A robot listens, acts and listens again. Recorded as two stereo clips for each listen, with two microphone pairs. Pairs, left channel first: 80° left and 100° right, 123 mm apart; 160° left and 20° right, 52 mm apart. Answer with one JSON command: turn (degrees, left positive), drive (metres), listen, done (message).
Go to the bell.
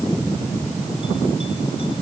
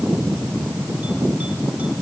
{"listen": true}
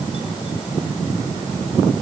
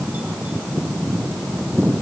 {"listen": true}
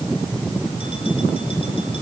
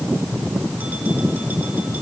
{"done": "I can't make out a bell."}